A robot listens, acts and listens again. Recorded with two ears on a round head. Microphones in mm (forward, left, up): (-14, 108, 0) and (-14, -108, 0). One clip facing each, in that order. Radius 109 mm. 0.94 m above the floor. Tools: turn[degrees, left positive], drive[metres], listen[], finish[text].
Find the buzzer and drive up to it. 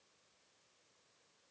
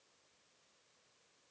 Action: listen[]
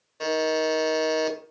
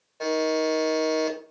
Thought: The buzzer: about 20° left or 160° left.
Action: turn[20]
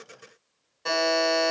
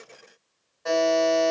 Thought: So it is at 140° left.
Action: turn[140]
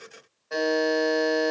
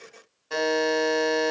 Thought: The buzzer is now 45° right.
Action: turn[-45]
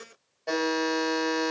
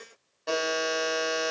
Thought: The buzzer is now 10° right.
Action: turn[-10]
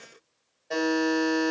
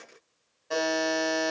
Action: drive[1.0]
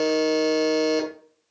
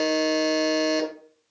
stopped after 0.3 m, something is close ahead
Action: finish[Something is in my way. I am facing the buzzer but have not reached it.]